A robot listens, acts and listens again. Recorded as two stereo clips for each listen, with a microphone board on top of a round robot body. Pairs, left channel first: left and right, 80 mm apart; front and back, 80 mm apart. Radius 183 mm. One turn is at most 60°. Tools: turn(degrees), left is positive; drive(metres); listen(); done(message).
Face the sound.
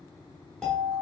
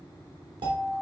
turn(degrees=60)
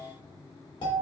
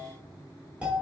turn(degrees=60)
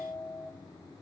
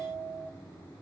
turn(degrees=45)
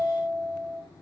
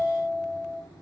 done("Found it: a doorbell, straight ahead.")